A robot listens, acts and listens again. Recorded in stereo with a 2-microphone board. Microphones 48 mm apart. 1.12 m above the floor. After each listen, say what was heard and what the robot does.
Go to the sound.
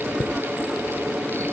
The chime: about 45° left or 135° left. Turn 45° left.
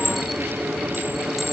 Drive 1.0 m forward.
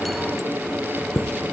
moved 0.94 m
Drive 1.0 m forward.
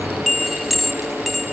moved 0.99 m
Drive 1.0 m forward.
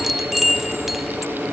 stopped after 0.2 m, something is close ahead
Arrived at the chime, straight ahead.